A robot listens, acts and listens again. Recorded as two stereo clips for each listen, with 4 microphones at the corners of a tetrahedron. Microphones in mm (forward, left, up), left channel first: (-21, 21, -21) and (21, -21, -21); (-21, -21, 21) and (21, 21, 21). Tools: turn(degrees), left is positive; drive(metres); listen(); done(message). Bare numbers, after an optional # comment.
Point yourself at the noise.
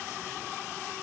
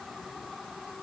listen()
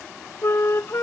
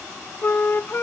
# The flute: 175° left.
turn(175)
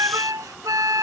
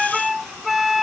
# The flute is now 40° right.
turn(-40)
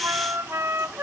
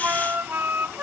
done("Facing the flute.")